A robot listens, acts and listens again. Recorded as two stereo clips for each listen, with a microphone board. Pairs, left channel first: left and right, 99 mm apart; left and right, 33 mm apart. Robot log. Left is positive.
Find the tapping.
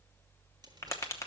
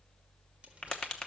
note: The tapping: about 30° left or 150° left.
cmd yaw +30
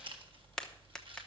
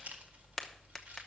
end: Found it: tapping, straight ahead, 1 to 2 m away.